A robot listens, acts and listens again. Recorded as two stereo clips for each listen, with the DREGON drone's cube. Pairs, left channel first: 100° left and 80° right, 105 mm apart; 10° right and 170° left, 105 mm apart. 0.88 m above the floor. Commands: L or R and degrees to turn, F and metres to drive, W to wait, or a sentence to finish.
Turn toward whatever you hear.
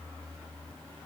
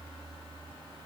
W
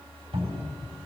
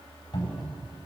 R60
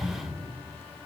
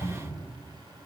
R30
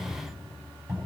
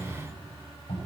R20
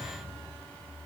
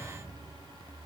W
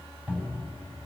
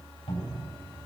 Facing the cupboard door.